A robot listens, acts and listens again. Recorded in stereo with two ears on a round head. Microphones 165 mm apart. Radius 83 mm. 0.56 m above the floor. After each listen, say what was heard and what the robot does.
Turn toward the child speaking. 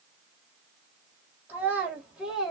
Turn 30° left.
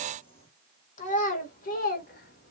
So it is at 125° left. Turn 125° left.
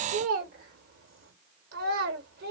The child speaking is now 55° right. Turn 55° right.
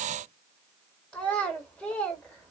Facing the child speaking, 1 to 2 m away.